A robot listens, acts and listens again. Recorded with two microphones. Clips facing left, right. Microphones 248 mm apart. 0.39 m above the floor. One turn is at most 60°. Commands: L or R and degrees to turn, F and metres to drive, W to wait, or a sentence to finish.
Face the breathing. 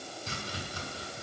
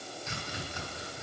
W
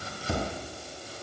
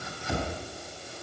W
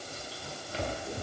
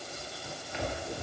I can't make out breathing, only chopping.